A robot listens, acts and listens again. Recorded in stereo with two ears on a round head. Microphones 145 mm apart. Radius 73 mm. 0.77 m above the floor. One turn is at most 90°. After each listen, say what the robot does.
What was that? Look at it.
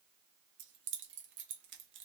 Turn 90° right.
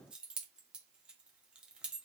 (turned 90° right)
Found it: keys jangling, straight ahead.